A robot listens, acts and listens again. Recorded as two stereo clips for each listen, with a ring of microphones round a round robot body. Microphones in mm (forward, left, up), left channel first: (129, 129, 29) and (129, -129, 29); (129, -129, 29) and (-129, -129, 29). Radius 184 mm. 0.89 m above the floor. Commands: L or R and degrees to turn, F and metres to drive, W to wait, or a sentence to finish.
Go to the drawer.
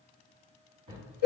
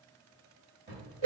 R120
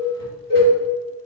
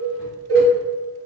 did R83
R40
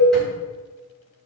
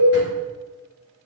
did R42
W
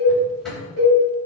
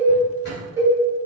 Facing where the drawer came from. I can't hear it now. I did not reach it.